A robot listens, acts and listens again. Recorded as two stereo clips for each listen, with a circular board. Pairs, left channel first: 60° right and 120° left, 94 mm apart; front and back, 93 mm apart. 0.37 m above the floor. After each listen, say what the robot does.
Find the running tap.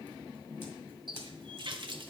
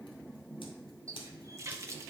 Turn 130° left.
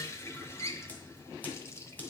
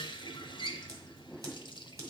Facing the running tap.